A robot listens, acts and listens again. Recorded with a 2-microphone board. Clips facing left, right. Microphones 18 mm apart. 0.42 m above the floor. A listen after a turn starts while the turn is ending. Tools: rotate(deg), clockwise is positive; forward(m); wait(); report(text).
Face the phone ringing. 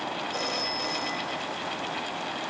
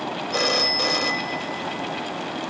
rotate(50)
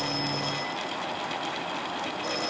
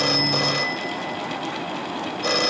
rotate(70)
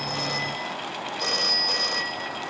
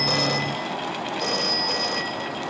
rotate(-15)
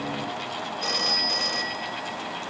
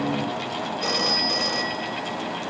report("Found it: a phone ringing, straight ahead.")